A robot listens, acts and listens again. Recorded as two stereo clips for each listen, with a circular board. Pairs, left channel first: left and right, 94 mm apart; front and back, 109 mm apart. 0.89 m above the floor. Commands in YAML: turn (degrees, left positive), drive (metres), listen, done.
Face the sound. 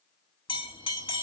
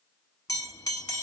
turn: 55
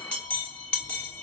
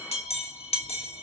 turn: 15
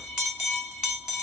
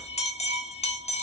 done: "Facing the bell."